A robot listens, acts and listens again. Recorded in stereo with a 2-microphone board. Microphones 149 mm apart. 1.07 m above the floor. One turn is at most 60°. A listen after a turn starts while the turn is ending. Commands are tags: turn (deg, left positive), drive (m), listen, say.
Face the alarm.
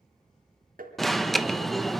<turn deg="30"/>
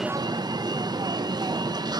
<turn deg="-35"/>
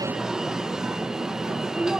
<say>Facing the alarm.</say>